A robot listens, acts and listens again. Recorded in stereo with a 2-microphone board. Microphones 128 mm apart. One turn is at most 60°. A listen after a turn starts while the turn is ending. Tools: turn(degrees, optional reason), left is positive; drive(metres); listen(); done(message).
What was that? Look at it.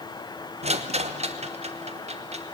turn(degrees=-55, reason="The rattle: about 55° right or 125° right.")
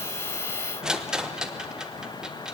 done("Facing the rattle.")